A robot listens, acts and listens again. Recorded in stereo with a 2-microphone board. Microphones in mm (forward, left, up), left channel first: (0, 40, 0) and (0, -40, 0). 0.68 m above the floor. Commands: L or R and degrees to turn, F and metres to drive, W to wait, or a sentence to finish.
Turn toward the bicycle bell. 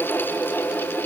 W
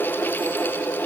W
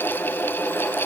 I can't make out a bicycle bell to turn to.